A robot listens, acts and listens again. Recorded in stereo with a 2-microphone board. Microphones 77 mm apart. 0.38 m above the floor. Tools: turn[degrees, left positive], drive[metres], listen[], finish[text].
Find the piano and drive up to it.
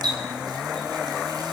Action: listen[]
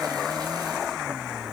Action: listen[]
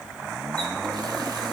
Action: finish[I can't make out a piano, only a running tap.]